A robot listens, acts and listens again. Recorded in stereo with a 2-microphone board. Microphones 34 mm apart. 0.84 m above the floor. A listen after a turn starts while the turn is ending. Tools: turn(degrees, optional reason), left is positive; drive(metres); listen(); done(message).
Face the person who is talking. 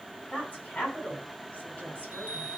turn(degrees=35, reason="The woman speaking: about 35° left or 145° left.")
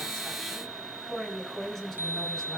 done("Found it: a woman speaking, straight ahead, over 4 m away.")